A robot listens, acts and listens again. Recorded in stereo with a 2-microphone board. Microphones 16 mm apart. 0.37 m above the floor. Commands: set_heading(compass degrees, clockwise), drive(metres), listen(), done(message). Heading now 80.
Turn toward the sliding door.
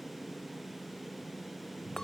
listen()
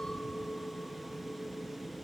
listen()
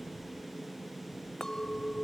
done("I can't make out a sliding door to turn to.")